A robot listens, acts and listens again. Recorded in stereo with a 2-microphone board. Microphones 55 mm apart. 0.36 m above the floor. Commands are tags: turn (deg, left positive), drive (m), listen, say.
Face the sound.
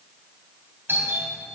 <turn deg="-45"/>
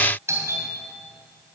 <turn deg="-85"/>
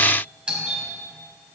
<turn deg="-20"/>
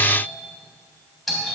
<say>Found it: a doorbell, straight ahead, 2 to 4 m away.</say>